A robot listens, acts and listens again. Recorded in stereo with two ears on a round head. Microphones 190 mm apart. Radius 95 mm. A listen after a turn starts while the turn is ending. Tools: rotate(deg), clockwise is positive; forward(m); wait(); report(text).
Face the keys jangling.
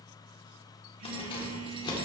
rotate(-20)
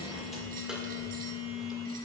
wait()
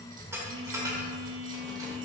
rotate(15)
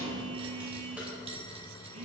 wait()
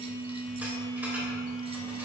wait()
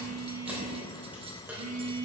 rotate(10)
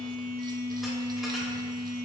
wait()
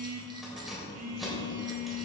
report("Facing the keys jangling, 2 to 4 m away.")